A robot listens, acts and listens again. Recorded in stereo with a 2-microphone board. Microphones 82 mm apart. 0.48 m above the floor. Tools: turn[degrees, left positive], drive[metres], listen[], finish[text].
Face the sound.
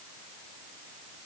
Action: listen[]
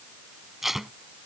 Action: turn[-30]
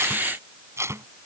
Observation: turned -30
Thought: So it is at 145° right.
Action: turn[-145]
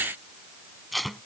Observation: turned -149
Action: finish[Found it: tape being pulled, straight ahead.]